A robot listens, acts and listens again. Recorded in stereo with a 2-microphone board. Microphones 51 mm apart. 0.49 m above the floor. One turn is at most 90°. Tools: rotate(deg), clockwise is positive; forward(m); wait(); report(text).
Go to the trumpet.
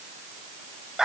wait()
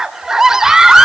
wait()
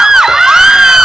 report("I can't make out a trumpet to turn to.")